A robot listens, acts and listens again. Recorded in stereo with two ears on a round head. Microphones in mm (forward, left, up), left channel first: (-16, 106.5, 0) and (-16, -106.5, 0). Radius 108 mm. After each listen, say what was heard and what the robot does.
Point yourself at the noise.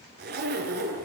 The zipper: about 45° right or 135° right. Turn 45° right.
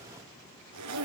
So it is at 85° right. Turn 85° right.
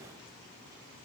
Keep listening.
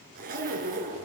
The zipper is now 35° right. Turn 35° right.
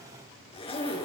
The zipper is now 25° left. Turn 25° left.
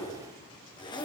The zipper is now 20° left. Turn 20° left.
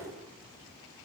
Facing the zipper, over 4 m away.